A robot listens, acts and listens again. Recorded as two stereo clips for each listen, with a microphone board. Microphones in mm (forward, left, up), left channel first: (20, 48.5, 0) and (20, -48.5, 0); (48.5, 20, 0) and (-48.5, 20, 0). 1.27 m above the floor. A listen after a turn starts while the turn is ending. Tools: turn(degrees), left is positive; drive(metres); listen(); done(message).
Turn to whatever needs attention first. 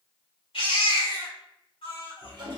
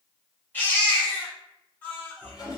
turn(degrees=70)
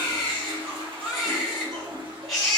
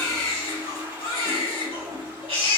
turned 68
done("Found it: a baby crying, straight ahead.")